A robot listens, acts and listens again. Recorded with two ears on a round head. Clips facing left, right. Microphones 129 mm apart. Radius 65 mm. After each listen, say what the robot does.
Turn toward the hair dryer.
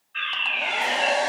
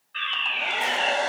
Turn 30° left.
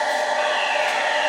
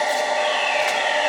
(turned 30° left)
Turn 15° right.
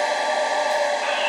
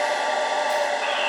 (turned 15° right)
Found it: a hair dryer, straight ahead, 1 to 2 m away.